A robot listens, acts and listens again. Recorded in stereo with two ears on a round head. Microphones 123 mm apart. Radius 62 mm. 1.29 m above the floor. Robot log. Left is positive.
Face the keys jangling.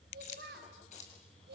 note: The keys jangling: about 60° left or 120° left.
cmd yaw +60
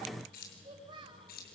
note: So it is at 70° left.
cmd yaw +70
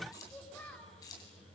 note: The keys jangling is now 25° left.
cmd yaw +25
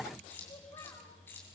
note: The keys jangling is now 15° left.
cmd yaw +15
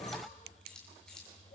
end: Found it: keys jangling, straight ahead.